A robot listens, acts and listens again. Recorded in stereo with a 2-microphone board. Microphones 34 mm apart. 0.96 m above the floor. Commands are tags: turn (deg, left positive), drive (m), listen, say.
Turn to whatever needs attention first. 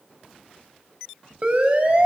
<turn deg="-45"/>
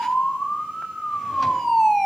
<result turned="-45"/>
<say>Found it: a siren, straight ahead, over 4 m away.</say>